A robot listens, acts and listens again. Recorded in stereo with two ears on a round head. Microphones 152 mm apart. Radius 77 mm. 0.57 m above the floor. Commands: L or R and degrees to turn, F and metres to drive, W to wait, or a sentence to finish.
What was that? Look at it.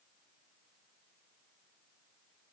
W
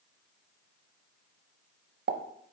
R60
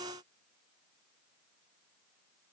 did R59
W
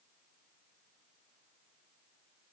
I heard a pop, but can't make it out now. It was about 5° right or 60° right.